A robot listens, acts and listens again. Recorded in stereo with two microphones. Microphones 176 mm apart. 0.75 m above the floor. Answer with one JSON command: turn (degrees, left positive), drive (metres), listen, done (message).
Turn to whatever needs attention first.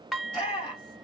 {"turn": 40}
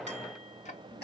{"turn": 95}
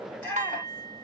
{"turn": 10}
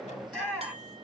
{"done": "Facing the shout."}